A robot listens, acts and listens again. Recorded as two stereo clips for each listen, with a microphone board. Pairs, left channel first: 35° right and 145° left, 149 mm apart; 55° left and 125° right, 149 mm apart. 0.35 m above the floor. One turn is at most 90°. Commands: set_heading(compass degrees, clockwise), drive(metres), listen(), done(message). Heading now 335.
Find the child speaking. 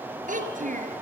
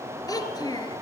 set_heading(245)
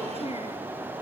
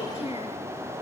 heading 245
set_heading(215)
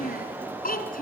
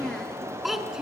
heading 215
set_heading(255)
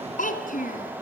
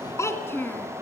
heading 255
set_heading(275)
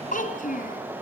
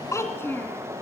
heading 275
set_heading(295)
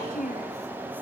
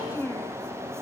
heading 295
set_heading(315)
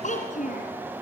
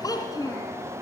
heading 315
done("Facing the child speaking, 2 to 4 m away.")